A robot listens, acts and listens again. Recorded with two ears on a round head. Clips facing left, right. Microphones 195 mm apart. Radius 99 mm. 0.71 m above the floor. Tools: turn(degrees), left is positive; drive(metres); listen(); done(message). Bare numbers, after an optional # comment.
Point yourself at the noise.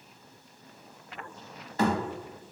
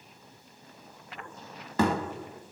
# The thud: about 60° right or 120° right.
turn(-60)
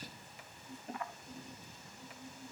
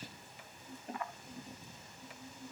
listen()
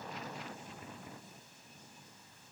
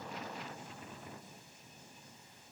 done("I heard a thud, but can't make it out now. It was about straight ahead or 60° right.")